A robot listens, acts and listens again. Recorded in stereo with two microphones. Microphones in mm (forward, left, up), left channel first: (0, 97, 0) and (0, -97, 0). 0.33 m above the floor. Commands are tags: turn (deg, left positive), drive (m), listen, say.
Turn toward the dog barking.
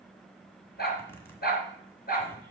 <turn deg="55"/>
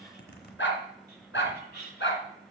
<turn deg="80"/>
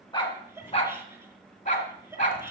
<turn deg="40"/>
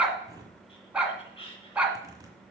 <say>Facing the dog barking, 1 to 2 m away.</say>